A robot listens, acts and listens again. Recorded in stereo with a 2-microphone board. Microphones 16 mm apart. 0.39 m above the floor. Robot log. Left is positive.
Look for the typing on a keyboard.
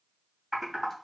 note: The typing on a keyboard: about 20° right or 160° right.
cmd yaw -20
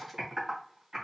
note: So it is at 135° right.
cmd yaw -135
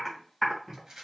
end: Found it: typing on a keyboard, straight ahead.